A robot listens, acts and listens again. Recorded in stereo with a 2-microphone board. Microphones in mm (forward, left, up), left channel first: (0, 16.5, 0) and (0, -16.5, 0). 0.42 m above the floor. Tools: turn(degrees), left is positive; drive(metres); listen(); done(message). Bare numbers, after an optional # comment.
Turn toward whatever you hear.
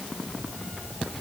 listen()
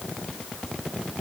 listen()
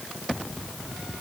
done("I can't make out anything.")